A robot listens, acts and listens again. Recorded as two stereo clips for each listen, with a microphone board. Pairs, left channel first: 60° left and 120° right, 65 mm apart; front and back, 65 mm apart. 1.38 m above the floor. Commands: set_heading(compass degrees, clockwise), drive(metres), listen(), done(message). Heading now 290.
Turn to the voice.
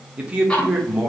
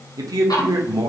set_heading(120)
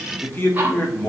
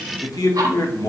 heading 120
done("Found it: a man speaking, straight ahead.")